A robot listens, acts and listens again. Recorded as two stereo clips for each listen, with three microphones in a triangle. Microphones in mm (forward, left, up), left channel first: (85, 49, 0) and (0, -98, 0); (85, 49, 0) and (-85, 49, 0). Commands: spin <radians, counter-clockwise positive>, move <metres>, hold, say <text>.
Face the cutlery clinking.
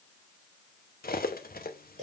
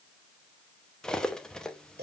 spin 1.48
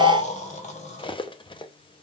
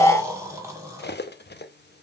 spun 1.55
say Found it: cutlery clinking, straight ahead.